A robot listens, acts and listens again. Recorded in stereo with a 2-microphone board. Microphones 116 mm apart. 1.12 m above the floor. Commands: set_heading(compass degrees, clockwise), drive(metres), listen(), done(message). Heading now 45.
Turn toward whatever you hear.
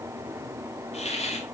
set_heading(340)
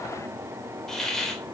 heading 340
done("Facing the hiss.")